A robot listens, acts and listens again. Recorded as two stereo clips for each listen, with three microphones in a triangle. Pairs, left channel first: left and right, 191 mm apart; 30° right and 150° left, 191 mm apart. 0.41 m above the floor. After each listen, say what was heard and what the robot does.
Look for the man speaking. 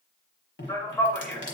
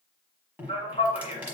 The man speaking: 10° left. Turn 10° left.
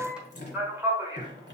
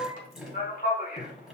The man speaking is now 25° right. Turn 25° right.
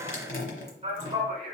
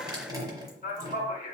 The man speaking is now 55° right. Turn 55° right.
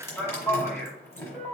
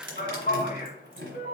Found it: a man speaking, straight ahead.